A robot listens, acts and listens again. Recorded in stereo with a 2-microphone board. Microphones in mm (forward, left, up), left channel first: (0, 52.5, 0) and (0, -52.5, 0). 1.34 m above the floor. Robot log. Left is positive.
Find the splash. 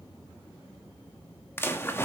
note: The splash: about 25° left or 155° left.
cmd yaw +25
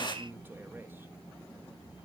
note: So it is at 130° left.
cmd yaw +130
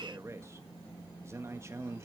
end: Facing where the splash came from. I can't hear it now.